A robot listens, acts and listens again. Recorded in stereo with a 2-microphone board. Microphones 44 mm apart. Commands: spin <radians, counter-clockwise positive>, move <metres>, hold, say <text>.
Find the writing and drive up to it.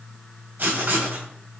spin -0.87
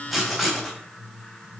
move 1.0
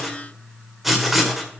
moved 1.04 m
move 1.0
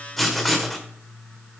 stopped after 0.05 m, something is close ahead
say I am next to the writing.